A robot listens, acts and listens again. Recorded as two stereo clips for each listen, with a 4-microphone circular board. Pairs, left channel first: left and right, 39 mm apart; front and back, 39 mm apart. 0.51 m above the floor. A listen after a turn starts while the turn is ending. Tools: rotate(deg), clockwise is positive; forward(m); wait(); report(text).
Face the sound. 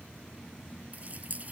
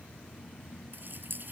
rotate(140)
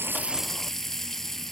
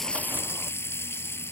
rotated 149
rotate(-10)
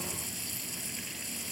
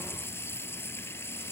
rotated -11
report("Found it: a running tap, straight ahead.")